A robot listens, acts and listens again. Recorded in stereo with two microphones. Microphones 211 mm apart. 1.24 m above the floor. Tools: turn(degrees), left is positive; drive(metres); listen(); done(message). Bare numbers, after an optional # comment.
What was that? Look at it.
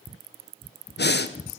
# The breathing: about 55° left or 125° left.
turn(55)
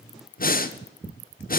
# So it is at 55° left.
turn(55)
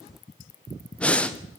done("Facing the breathing.")